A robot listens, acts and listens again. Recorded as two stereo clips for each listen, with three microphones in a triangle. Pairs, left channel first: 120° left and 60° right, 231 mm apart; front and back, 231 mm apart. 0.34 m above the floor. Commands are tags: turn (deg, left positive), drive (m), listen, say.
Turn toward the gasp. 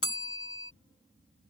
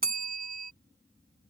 <listen/>
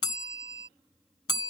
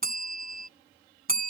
<listen/>
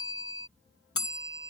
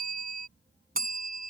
<say>I can't make out a gasp, only a bell.</say>